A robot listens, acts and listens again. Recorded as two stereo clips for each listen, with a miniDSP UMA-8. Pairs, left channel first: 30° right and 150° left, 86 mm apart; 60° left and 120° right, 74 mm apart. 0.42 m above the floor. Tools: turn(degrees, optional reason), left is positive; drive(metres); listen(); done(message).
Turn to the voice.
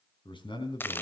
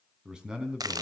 turn(degrees=-40, reason="The man speaking: 40° right.")
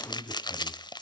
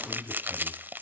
done("Found it: a man speaking, straight ahead, over 4 m away.")